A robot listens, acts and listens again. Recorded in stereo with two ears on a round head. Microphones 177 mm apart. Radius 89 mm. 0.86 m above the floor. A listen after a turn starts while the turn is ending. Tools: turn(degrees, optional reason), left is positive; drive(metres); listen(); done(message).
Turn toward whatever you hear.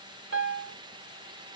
turn(degrees=-60, reason="The piano: about 60° right or 120° right.")
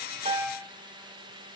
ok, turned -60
listen()
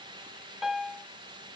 done("Found it: a piano, straight ahead.")